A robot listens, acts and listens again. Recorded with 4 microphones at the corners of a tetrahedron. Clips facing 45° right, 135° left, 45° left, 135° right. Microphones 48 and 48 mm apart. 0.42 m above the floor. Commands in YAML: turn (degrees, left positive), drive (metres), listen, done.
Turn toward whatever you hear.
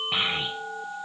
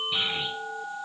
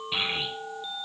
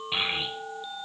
turn: -65
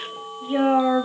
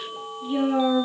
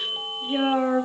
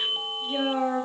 turn: -20
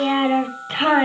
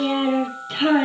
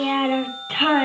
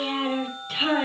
done: "Found it: a child speaking, straight ahead."